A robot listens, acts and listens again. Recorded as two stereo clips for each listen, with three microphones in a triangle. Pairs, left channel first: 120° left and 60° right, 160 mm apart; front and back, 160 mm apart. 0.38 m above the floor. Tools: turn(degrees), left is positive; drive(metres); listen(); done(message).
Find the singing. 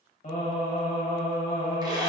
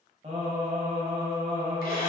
turn(degrees=135)
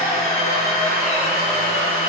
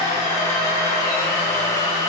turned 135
listen()
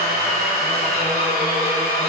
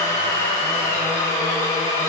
listen()
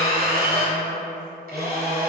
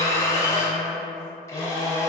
turn(degrees=65)
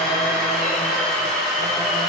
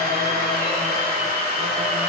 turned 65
listen()
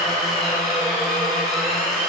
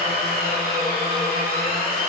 listen()
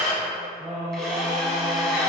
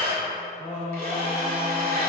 turn(degrees=-20)
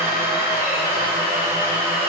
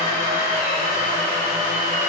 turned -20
listen()
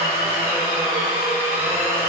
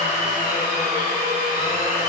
listen()
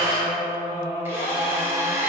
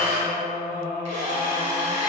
done("Found it: singing, straight ahead, 1 to 2 m away.")